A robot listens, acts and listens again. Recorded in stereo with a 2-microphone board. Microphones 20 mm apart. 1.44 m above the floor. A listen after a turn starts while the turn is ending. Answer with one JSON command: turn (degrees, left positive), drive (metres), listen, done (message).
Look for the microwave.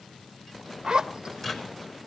{"turn": 20}
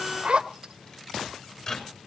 {"turn": 140}
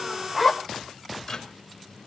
{"turn": 20}
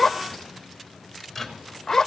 {"done": "Found it: a microwave, straight ahead, 2 to 4 m away."}